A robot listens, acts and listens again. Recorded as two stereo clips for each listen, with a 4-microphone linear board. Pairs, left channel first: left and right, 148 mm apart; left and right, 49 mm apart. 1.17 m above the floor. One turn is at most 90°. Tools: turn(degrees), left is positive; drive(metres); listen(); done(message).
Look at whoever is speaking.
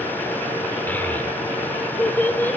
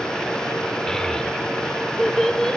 turn(degrees=30)
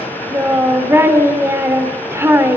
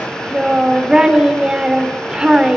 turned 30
turn(degrees=-20)
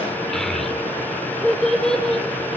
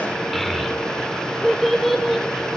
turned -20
done("Facing the child speaking.")